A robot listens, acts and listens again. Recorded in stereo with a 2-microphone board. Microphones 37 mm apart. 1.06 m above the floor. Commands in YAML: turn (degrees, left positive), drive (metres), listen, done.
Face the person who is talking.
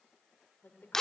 turn: 70
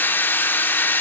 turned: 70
listen: true
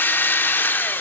listen: true
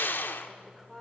done: "Facing the woman speaking, 2 to 4 m away."